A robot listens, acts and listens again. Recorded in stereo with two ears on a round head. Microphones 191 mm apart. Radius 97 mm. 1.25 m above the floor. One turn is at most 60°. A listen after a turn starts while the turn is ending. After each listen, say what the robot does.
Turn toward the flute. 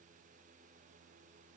Keep listening.
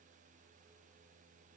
Keep listening.
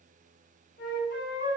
Turn 45° left.
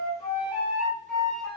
Found it: a flute, straight ahead.